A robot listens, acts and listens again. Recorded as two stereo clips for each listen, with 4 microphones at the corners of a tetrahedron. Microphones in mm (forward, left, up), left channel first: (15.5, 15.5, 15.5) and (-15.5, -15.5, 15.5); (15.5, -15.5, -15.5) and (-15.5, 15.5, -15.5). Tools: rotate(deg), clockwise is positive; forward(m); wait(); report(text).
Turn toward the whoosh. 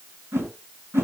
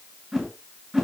rotate(150)
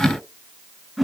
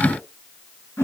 rotate(45)
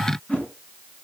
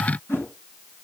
rotate(15)
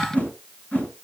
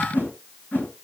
report("Found it: a whoosh, straight ahead.")